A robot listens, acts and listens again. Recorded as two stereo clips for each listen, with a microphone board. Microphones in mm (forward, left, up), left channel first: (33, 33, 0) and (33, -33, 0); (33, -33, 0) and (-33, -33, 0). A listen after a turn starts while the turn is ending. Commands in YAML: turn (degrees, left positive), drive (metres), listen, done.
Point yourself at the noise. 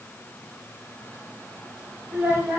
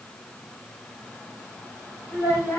turn: -25
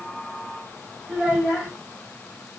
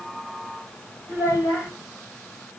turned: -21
done: "Facing the child speaking, 1 to 2 m away."